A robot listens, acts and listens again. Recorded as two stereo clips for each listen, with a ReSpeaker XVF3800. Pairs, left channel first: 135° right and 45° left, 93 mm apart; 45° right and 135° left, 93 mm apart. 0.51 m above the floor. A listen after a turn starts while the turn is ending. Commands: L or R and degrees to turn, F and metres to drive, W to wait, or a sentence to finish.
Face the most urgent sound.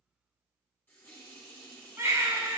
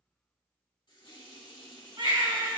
L105
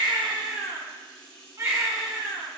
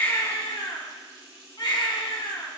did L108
Facing the baby crying, 1 to 2 m away.